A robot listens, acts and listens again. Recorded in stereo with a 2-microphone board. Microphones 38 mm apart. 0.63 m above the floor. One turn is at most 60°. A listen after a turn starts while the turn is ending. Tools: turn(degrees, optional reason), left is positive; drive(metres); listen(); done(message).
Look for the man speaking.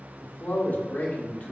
turn(degrees=45, reason="The man speaking: about 45° left or 135° left.")
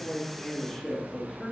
done("Facing the man speaking, 1 to 2 m away.")